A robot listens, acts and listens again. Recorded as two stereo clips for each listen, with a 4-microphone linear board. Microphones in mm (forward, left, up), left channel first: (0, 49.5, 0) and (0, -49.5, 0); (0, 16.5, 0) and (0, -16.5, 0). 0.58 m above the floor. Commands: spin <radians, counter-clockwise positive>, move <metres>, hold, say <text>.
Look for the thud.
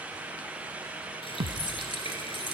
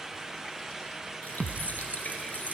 spin -1.22
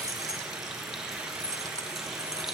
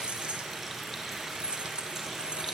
hold
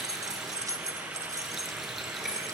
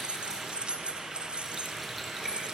say I heard a thud, but can't make it out now. It was about straight ahead or 40° right.